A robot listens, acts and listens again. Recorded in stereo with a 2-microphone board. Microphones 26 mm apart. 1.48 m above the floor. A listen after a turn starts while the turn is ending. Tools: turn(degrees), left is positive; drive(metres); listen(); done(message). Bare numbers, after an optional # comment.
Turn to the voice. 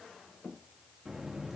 listen()
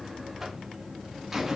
listen()
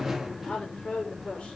# The woman speaking: about 50° left or 130° left.
turn(50)
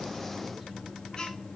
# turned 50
listen()
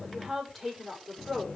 done("Facing the woman speaking, over 4 m away.")